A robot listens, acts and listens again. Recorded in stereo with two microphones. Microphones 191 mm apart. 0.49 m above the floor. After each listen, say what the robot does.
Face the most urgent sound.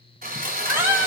Turn 30° right.
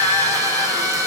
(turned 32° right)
Turn 20° left.
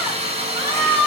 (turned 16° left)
Found it: a scream, straight ahead, 1 to 2 m away.